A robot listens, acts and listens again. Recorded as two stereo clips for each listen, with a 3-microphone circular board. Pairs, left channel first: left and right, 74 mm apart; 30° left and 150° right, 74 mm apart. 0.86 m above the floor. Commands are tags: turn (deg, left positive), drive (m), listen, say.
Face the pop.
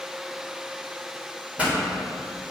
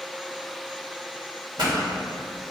<turn deg="-160"/>
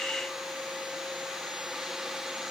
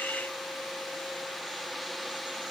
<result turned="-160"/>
<say>Facing where the pop came from. I can't hear it now.</say>